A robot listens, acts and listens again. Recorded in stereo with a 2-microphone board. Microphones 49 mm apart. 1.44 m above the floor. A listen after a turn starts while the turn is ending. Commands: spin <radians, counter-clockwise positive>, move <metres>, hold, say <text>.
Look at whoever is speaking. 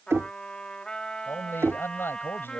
spin 0.79
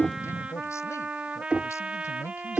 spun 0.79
spin 1.48
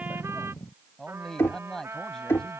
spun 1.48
spin 0.26
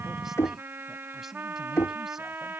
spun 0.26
hold
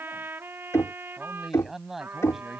say Found it: a man speaking, straight ahead.